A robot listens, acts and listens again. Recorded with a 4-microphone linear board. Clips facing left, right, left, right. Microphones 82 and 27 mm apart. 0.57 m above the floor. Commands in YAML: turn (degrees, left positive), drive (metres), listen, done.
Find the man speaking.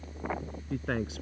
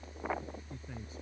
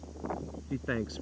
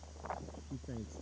turn: 90
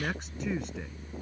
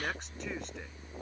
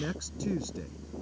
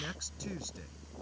done: "Found it: a man speaking, straight ahead."